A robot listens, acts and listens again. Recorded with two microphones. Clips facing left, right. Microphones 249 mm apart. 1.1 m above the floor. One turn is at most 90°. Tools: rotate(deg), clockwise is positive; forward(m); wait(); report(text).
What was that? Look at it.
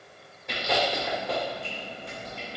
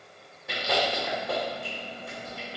rotate(30)
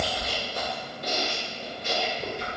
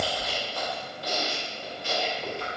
rotate(-20)
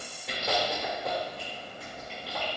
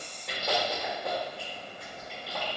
report("Found it: chewing, straight ahead.")